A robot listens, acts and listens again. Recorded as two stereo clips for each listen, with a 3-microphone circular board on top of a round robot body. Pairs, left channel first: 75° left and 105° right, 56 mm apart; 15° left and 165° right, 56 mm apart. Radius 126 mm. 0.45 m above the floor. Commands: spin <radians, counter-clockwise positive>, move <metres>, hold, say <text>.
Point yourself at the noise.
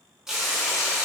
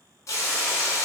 spin -0.44
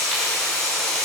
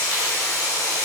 spin -0.17
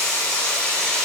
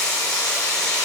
say Facing the frying.